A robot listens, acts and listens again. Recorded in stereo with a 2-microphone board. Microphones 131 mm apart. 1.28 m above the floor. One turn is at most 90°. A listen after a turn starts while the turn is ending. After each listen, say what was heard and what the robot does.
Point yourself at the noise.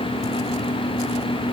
Keep listening.
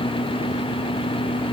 Keep listening.
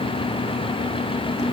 I can't make out anything to turn to.